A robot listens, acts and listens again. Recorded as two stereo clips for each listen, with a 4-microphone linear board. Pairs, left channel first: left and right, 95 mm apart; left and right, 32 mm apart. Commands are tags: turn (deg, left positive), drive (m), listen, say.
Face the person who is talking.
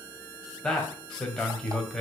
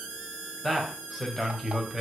<turn deg="30"/>
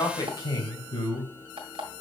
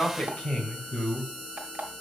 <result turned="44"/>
<turn deg="130"/>
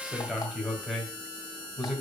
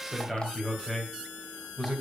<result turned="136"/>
<say>Found it: a man speaking, straight ahead, 2 to 4 m away.</say>